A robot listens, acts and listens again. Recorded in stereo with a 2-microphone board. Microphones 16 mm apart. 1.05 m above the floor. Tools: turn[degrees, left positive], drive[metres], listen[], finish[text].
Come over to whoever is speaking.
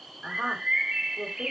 Thought: The woman speaking: about 65° right or 115° right.
Action: turn[-65]
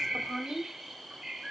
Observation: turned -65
Action: drive[1.0]
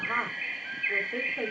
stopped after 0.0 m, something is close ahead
Thought: The woman speaking is now 15° right.
Action: turn[-15]
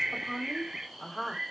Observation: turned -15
Action: finish[Blocked. The woman speaking is further on, straight ahead.]